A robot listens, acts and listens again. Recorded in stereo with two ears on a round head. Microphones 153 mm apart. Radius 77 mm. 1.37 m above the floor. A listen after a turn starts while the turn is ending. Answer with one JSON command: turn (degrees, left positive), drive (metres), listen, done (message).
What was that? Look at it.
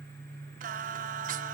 {"turn": -50}
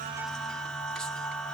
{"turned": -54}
{"done": "Facing the singing, 1 to 2 m away."}